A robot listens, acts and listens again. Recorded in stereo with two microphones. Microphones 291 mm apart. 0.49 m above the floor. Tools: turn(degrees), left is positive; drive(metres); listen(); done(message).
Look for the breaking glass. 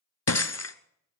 turn(degrees=60)
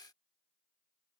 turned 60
listen()
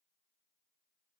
done("I heard breaking glass, but can't make it out now. It was about straight ahead or 60° left.")